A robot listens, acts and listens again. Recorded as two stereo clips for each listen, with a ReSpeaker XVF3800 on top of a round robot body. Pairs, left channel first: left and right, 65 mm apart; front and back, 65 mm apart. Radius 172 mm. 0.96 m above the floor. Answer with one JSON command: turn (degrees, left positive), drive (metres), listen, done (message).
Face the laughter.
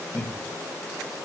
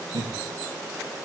{"turn": 170}
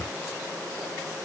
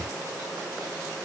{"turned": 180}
{"turn": -10}
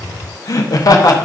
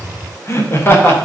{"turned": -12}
{"turn": 60}
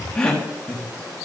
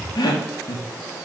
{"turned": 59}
{"turn": 15}
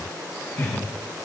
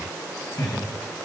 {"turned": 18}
{"turn": 10}
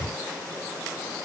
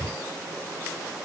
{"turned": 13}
{"listen": true}
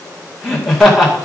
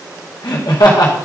{"done": "Found it: laughter, straight ahead."}